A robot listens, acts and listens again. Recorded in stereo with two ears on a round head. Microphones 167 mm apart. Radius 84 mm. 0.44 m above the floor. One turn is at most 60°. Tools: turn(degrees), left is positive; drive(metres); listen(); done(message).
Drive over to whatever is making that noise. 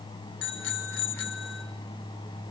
turn(degrees=60)
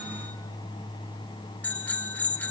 turn(degrees=10)
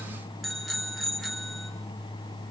drive(metres=1.0)
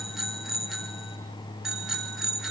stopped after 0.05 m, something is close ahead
done("Something is in my way. I am facing the bicycle bell but have not reached it.")